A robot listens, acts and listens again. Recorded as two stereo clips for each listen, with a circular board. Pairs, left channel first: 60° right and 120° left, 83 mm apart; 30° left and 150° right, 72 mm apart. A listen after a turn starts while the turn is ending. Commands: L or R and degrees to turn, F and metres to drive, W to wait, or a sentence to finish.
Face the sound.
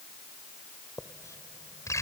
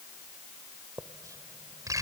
R110
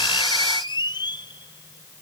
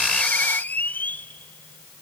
R35
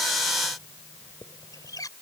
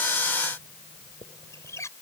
R15
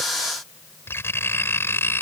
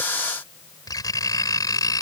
Facing the writing.